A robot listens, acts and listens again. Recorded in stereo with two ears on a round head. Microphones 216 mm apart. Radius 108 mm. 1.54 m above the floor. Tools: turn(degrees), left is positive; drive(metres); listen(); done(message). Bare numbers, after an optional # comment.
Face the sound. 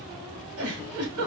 # The giggle: about 65° right or 115° right.
turn(-65)
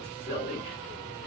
# So it is at 10° right.
turn(-10)
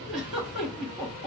done("Found it: a giggle, straight ahead.")